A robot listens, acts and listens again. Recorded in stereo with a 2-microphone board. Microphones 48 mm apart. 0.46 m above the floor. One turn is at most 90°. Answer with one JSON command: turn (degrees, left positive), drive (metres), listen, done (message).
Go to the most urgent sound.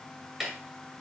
{"listen": true}
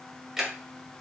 {"listen": true}
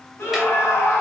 {"turn": 70}
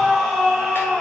{"drive": 1.0}
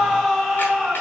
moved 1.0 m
{"drive": 1.0}
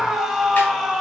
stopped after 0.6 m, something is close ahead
{"done": "Arrived at the scream, straight ahead."}